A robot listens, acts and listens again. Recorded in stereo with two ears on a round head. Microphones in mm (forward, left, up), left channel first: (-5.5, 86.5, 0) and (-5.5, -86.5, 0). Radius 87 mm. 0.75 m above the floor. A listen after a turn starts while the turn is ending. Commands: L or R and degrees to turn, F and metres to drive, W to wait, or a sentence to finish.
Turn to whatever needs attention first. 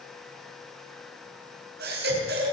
R55
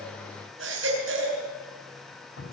R70
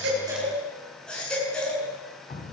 Facing the baby crying, over 4 m away.